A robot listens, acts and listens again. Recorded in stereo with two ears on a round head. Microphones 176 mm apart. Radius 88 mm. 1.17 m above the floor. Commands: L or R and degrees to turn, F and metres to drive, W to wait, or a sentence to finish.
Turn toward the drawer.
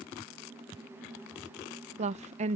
W
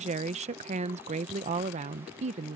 W
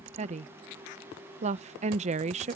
I can't make out a drawer, only a woman speaking.